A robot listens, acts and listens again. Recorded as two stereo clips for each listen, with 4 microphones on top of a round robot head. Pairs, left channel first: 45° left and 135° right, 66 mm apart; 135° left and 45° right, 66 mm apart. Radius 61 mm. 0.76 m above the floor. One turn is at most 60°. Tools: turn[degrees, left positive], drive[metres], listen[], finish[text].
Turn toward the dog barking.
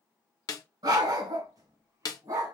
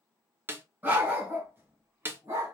Thought: The dog barking: 100° right.
Action: turn[-60]
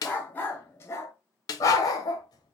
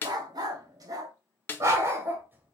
Thought: The dog barking is now 15° left.
Action: turn[15]
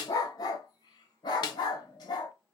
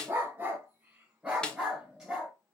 Thought: The dog barking is now 35° left.
Action: turn[35]
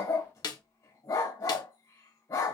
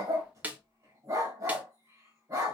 Action: finish[Found it: a dog barking, straight ahead, 1 to 2 m away.]